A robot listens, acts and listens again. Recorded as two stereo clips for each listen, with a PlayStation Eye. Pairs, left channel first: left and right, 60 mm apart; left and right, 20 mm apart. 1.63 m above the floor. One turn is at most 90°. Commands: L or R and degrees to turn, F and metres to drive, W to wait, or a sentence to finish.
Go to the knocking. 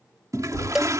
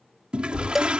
L60
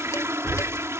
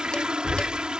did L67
R10
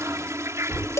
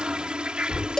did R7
F1.0
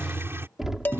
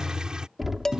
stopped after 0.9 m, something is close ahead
Something is in my way. I am facing the knocking but have not reached it.